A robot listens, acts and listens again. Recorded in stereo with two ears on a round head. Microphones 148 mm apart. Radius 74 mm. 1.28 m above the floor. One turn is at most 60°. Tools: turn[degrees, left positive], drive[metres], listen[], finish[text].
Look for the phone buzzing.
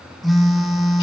Action: turn[30]
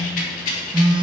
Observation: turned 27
Thought: So it is at 30° right.
Action: turn[-30]
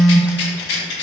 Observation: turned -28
Action: finish[Facing the phone buzzing, under 1 m away.]